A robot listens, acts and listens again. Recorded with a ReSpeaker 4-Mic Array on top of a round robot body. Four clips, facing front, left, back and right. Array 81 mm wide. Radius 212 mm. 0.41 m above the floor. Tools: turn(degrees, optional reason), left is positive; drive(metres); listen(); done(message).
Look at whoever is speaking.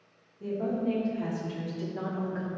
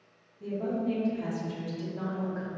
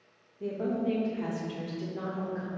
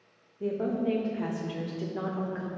turn(degrees=-75, reason="The woman speaking: 75° right.")
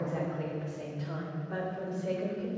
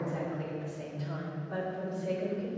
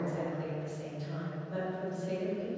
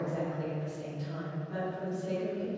turn(degrees=30, reason="The woman speaking is now 30° left.")
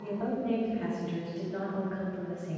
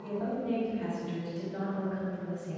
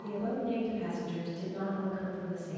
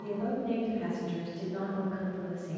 done("Found it: a woman speaking, straight ahead.")